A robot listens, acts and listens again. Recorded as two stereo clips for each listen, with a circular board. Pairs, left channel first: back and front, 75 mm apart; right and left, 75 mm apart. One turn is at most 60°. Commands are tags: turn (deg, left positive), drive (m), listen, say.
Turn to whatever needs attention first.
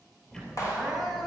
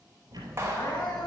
<turn deg="-60"/>
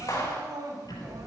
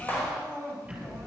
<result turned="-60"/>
<turn deg="-25"/>
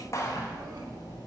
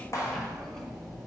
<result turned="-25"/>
<listen/>
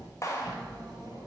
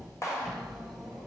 <listen/>
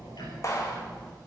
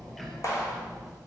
<say>I heard crying from this way, but can't make it out now.</say>